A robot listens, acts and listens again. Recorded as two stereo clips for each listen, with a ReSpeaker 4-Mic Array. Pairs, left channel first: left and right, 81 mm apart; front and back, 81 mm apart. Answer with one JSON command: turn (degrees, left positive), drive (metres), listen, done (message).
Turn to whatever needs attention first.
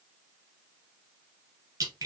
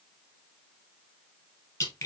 {"listen": true}
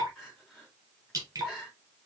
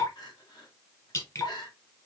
{"done": "Found it: crying, straight ahead, 2 to 4 m away."}